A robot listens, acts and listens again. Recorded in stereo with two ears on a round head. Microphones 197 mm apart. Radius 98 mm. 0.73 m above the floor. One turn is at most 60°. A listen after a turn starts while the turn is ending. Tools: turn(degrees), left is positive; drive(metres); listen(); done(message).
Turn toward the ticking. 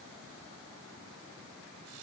listen()
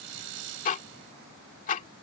turn(degrees=35)
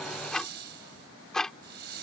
done("Found it: ticking, straight ahead.")